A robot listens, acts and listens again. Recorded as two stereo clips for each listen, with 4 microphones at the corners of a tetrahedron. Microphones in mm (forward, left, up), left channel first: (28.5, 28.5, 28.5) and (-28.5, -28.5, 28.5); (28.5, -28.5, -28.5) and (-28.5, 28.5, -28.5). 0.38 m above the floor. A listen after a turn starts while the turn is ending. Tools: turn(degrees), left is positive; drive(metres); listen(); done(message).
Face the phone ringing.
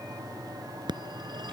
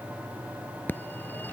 turn(degrees=-110)
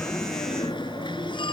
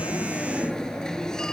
turn(degrees=40)
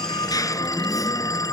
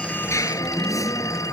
done("Found it: a phone ringing, straight ahead.")